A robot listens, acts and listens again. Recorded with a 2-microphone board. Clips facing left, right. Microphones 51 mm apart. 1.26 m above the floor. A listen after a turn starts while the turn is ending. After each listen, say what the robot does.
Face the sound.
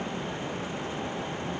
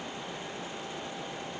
Keep listening.
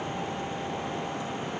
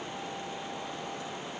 Keep listening.
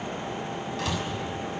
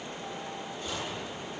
Turn 90° left.
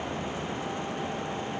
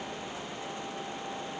I heard a door slam from this way, but can't make it out now.